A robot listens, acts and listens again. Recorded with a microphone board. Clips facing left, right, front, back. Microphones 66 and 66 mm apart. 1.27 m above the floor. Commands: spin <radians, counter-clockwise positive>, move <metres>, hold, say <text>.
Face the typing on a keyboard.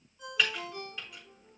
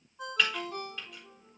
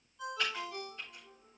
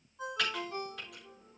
spin 3.05
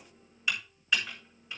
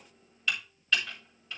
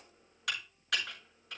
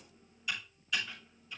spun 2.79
spin 0.26
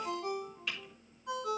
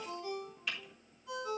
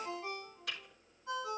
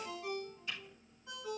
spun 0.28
say Found it: typing on a keyboard, straight ahead.